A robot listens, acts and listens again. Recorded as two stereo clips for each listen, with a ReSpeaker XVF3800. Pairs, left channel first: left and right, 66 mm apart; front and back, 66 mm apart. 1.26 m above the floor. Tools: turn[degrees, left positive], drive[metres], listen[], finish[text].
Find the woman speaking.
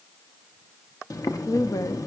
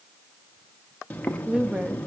Thought: The woman speaking: 105° left.
Action: turn[105]
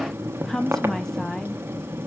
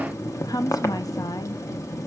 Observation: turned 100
Action: finish[Found it: a woman speaking, straight ahead.]